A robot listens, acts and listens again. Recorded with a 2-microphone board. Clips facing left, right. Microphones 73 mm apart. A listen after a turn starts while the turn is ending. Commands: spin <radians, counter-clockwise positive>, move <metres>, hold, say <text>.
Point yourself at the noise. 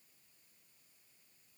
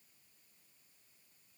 hold
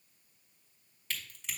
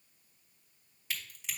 spin -0.52
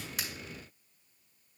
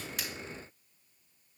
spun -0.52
hold
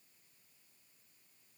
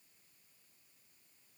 say I heard a crack, but can't make it out now. It was about 20° left or 140° right.